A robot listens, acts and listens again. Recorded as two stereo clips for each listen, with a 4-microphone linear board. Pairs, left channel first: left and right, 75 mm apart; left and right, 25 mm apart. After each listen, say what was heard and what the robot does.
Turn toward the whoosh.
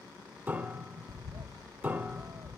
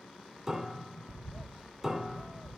Keep listening.
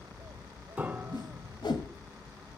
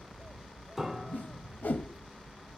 Turn 90° left.
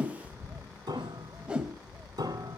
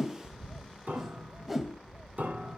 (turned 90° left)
So it is at 10° right. Turn 10° right.
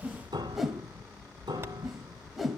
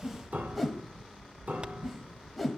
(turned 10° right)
Found it: a whoosh, straight ahead.